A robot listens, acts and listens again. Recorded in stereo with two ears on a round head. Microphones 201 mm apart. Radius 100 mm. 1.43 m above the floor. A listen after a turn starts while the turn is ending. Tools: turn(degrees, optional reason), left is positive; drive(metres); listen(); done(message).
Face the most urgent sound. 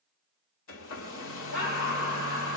turn(degrees=55, reason="The scream: about 55° left or 125° left.")
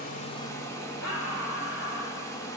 turn(degrees=70, reason="So it is at 70° left.")
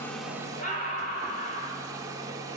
turn(degrees=35, reason="The scream is now 35° left.")
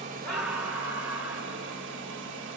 turn(degrees=-10, reason="The scream is now 10° right.")
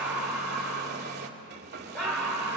done("Found it: a scream, straight ahead, over 4 m away.")